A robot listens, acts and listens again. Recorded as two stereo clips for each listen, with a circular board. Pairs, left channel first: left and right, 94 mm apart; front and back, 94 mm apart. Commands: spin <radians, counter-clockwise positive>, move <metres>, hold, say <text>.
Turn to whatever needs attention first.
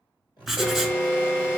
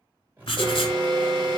spin 2.71
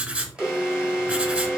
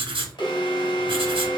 spin -0.17
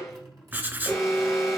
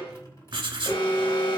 say Found it: an alarm, straight ahead, 2 to 4 m away.